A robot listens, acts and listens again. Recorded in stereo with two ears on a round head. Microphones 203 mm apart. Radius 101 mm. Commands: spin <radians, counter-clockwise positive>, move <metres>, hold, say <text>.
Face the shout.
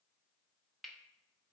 hold
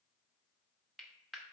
hold
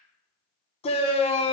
spin 0.44
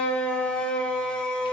say Found it: a shout, straight ahead, under 1 m away.